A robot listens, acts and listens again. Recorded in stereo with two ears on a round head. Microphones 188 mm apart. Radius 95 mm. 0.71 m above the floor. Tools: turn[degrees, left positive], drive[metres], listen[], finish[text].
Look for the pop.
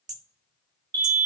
Action: listen[]
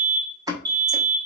Thought: The pop: about 15° right or 165° right.
Action: turn[-15]
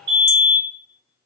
Action: listen[]
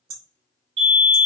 Action: finish[I heard a pop, but can't make it out now. It was about straight ahead or 150° right.]